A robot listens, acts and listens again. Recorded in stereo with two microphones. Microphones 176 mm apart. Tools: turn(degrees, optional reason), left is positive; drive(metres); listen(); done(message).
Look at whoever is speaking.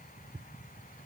listen()
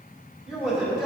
turn(degrees=-30)
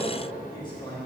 turn(degrees=25, reason="So it is at 25° left.")
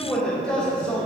done("Facing the man speaking.")